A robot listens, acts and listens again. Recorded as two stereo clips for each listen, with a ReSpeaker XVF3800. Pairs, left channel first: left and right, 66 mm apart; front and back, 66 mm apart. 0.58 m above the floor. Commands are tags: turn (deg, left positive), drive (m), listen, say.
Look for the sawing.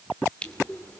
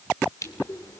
<listen/>
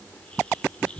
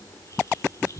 <listen/>
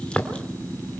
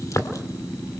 <say>I can't make out sawing, only crushing.</say>